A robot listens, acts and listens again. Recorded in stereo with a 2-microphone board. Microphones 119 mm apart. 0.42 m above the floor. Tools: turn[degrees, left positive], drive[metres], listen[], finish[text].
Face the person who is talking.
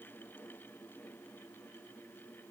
Action: listen[]
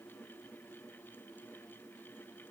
Action: listen[]
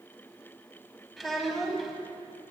Action: turn[30]
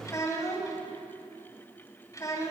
Thought: So it is at 150° left.
Action: turn[150]
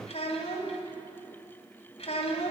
Thought: The child speaking is now 65° left.
Action: turn[65]
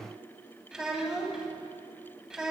Action: finish[Found it: a child speaking, straight ahead.]